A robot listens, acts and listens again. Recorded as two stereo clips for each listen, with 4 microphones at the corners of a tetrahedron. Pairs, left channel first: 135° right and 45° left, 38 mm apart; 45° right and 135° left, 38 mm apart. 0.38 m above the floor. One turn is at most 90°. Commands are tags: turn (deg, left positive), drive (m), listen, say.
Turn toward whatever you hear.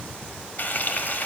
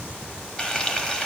<turn deg="-90"/>
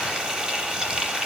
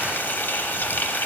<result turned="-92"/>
<turn deg="-20"/>
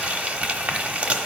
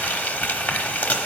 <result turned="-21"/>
<say>Found it: frying, straight ahead.</say>